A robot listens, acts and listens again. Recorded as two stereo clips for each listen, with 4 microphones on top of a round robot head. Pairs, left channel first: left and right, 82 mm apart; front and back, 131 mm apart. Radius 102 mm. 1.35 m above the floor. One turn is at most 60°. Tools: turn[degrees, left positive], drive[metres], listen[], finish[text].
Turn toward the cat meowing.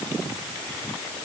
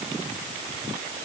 Action: listen[]
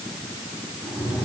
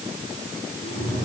Thought: The cat meowing: 10° left.
Action: turn[10]
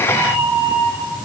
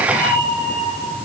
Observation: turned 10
Action: finish[Facing the cat meowing, over 4 m away.]